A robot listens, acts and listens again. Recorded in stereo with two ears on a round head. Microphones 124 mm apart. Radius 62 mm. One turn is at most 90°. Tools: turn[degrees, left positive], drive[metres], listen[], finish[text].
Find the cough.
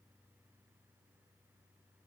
Action: listen[]
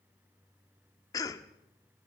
Thought: The cough: about 25° left or 155° left.
Action: turn[25]
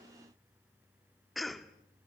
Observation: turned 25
Action: finish[Facing the cough.]